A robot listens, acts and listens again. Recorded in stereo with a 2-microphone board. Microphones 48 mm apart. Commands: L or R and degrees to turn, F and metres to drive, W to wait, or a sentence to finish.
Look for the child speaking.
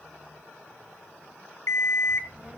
R30
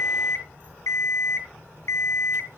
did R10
R55
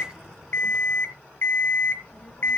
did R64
L15
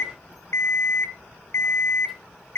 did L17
Found it: a child speaking, straight ahead.